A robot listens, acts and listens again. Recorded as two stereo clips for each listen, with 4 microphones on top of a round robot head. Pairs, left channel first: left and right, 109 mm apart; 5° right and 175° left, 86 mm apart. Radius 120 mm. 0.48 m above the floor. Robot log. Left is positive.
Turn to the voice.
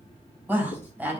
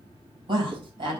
note: The woman speaking: 165° right.
cmd yaw -165
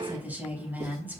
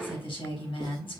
note: The woman speaking is now 15° right.
cmd yaw -15
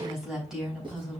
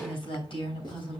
end: Facing the woman speaking.